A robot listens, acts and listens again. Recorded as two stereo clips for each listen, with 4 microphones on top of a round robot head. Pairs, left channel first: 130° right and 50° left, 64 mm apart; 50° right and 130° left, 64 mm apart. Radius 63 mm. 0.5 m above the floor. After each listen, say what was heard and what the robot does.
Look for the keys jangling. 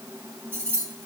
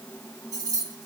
The keys jangling: 165° left. Turn 165° left.
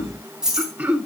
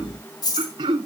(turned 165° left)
The keys jangling is now 30° right. Turn 30° right.
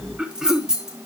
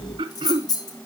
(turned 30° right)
The keys jangling is now 30° right. Turn 30° right.
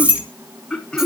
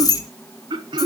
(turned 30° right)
The keys jangling is now 20° right. Turn 20° right.
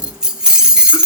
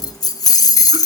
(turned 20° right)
The keys jangling is now 30° right. Turn 30° right.
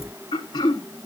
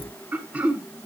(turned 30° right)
Keep listening.
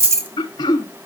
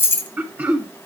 Facing the keys jangling.